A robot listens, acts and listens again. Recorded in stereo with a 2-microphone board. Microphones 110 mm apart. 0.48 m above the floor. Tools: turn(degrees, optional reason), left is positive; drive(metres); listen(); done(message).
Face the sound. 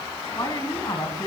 turn(degrees=40, reason="The woman speaking: about 40° left or 140° left.")
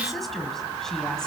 listen()
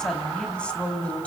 turn(degrees=15, reason="So it is at 15° left.")
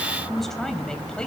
turn(degrees=10, reason="The woman speaking is now 10° left.")
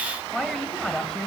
turn(degrees=10, reason="The woman speaking is now 10° left.")
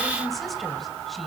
listen()
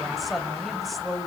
done("Found it: a woman speaking, straight ahead, 2 to 4 m away.")